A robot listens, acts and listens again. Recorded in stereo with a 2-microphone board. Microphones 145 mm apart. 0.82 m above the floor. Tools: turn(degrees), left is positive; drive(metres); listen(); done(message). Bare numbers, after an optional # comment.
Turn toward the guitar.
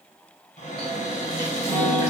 turn(30)
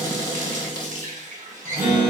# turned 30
# So it is at 20° right.
turn(-20)
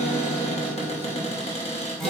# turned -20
done("Facing the guitar.")